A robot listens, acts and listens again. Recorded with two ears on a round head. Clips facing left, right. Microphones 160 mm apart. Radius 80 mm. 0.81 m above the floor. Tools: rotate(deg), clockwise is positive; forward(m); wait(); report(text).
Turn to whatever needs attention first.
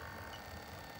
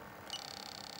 wait()
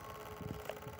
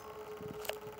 wait()
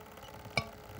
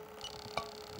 rotate(-30)
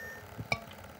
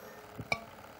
report("Found it: a scream, straight ahead.")